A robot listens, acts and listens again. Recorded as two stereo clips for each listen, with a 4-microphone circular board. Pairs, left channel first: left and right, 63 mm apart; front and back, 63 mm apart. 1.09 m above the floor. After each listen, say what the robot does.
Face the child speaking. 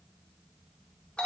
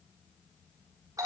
Keep listening.
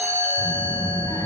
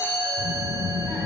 Turn 95° left.
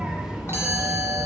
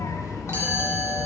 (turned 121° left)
Turn 10° right.
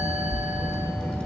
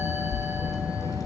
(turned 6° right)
Turn 15° left.
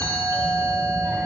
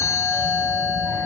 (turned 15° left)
Keep listening.
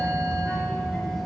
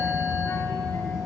Turn 10° left.
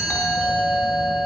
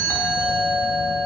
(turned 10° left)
Keep listening.
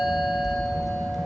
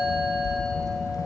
Found it: a child speaking, straight ahead, 2 to 4 m away.